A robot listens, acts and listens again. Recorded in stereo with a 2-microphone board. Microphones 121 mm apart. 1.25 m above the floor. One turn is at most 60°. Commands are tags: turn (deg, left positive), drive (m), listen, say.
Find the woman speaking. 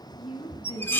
<turn deg="60"/>
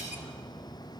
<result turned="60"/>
<listen/>
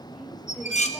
<say>Facing the woman speaking.</say>